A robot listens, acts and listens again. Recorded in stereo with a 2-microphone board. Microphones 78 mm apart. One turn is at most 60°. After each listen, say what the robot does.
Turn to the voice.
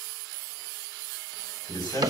Turn 60° left.
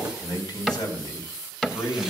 Turn 55° left.
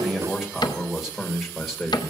Found it: a man speaking, straight ahead, 1 to 2 m away.